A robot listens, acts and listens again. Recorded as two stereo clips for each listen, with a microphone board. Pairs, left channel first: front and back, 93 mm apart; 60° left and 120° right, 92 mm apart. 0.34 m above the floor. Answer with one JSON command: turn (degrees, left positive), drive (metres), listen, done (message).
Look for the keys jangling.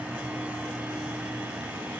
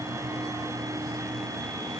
{"listen": true}
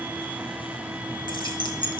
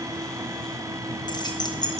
{"turn": 20}
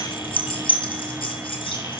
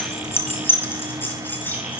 {"turn": -10}
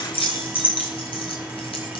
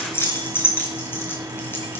{"done": "Facing the keys jangling."}